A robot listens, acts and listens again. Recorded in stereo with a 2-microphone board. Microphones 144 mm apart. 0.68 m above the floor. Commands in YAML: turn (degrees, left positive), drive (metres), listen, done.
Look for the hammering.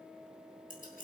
listen: true
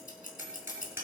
turn: -15
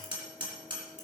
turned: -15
turn: -150
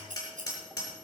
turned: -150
turn: 25
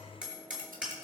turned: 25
turn: -10
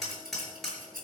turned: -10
done: "Found it: hammering, straight ahead."